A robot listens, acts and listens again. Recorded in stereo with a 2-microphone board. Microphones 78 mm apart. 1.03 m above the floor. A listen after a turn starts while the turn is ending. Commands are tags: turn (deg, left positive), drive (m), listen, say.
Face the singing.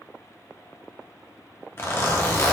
<listen/>
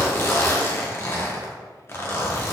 <listen/>
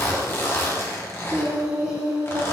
<turn deg="-15"/>
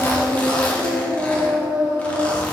<turn deg="-30"/>
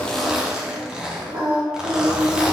<turn deg="-125"/>
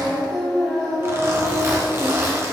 <turn deg="10"/>
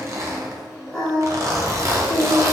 <say>Facing the singing, 2 to 4 m away.</say>